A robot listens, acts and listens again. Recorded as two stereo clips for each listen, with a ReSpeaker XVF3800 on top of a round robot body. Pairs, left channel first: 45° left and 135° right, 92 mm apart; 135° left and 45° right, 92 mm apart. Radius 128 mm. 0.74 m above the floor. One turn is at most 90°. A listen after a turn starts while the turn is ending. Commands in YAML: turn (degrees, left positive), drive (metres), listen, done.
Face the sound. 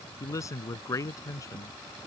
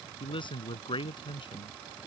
turn: 90
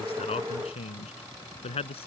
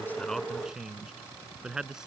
turn: 35
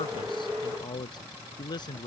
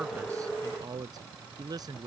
done: "Facing the man speaking."